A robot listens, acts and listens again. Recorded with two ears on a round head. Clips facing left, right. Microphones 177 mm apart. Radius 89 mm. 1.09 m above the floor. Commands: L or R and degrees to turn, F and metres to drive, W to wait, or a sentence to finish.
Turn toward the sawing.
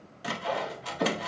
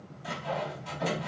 L70
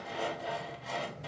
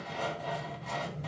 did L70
Facing the sawing, under 1 m away.